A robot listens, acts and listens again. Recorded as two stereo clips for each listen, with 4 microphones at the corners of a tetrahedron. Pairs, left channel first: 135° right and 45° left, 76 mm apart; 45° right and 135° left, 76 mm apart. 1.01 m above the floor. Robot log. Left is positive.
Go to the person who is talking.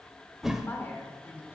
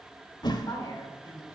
note: The woman speaking: 80° right.
cmd yaw -80
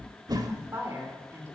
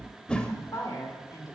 note: The woman speaking is now 10° right.
cmd yaw -10
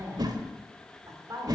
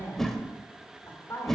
cmd fwd 1.0
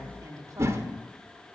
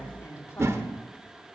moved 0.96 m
cmd fwd 1.0
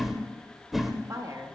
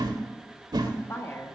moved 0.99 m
cmd fwd 1.0
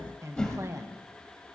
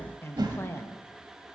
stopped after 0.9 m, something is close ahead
end: I am next to the woman speaking.